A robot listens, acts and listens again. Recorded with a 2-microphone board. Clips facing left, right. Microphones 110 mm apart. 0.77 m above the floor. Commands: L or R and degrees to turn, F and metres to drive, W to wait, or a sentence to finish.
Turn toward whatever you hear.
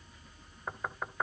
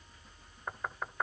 L30
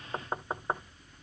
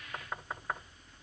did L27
L150
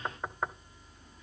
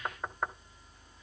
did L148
Found it: knocking, straight ahead, under 1 m away.